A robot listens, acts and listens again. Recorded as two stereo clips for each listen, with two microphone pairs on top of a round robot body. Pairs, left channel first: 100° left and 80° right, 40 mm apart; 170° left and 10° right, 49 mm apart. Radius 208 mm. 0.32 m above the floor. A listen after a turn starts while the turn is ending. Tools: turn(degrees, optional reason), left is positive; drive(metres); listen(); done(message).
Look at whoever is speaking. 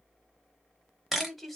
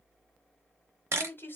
turn(degrees=-170, reason="The woman speaking: 170° right.")
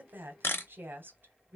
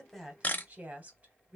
turn(degrees=-60, reason="The woman speaking is now 60° right.")
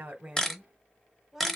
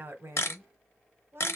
turn(degrees=10, reason="The woman speaking is now 10° left.")
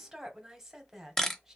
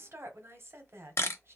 done("Found it: a woman speaking, straight ahead.")